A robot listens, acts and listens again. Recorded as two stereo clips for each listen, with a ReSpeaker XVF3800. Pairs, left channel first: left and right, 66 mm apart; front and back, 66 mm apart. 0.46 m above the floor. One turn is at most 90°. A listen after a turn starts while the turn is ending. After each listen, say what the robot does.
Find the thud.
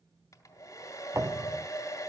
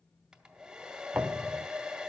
Turn 90° right.
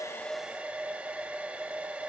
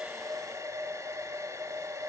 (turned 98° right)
Turn 15° right.
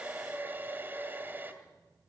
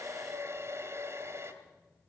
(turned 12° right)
I heard a thud from this way, but can't make it out now.